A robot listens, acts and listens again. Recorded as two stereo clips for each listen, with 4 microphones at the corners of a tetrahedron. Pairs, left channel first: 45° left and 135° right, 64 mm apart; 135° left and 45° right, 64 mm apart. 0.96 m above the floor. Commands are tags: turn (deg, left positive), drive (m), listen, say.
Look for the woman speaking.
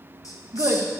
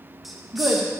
<turn deg="-95"/>
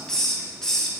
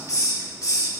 <listen/>
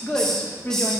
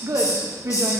<turn deg="-15"/>
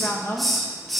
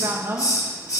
<say>Found it: a woman speaking, straight ahead.</say>